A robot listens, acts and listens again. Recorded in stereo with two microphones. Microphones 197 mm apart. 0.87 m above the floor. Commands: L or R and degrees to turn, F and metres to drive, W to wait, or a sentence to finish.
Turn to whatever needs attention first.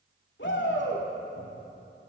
L70
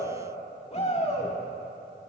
L35
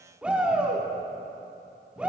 Facing the shout, 2 to 4 m away.